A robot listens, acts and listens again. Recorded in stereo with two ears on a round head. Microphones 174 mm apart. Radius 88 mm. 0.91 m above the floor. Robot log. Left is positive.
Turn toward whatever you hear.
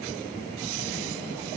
cmd idle
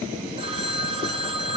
note: The phone ringing: about 30° right or 150° right.
cmd yaw -30
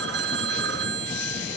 note: So it is at 120° right.
cmd yaw -120
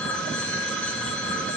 end: Facing the phone ringing.